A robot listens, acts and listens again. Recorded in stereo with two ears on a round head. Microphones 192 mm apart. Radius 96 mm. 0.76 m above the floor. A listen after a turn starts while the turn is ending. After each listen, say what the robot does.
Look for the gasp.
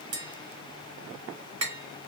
Keep listening.
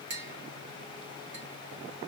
Keep listening.
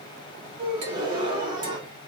Turn 20° right.
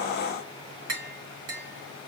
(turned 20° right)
Keep listening.
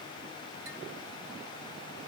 I heard a gasp, but can't make it out now. It was about straight ahead or 140° right.